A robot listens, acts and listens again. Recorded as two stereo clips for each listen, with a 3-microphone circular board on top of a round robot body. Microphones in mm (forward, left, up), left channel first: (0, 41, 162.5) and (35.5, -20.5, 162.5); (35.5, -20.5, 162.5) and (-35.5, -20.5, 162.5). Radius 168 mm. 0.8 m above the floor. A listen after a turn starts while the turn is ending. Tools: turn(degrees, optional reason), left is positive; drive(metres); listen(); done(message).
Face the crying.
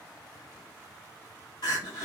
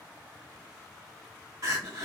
turn(degrees=140, reason="The crying: 140° left.")
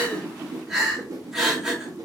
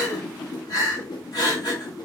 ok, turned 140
turn(degrees=20, reason="The crying is now 20° left.")
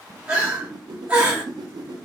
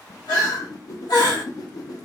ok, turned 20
done("Found it: crying, straight ahead, 1 to 2 m away.")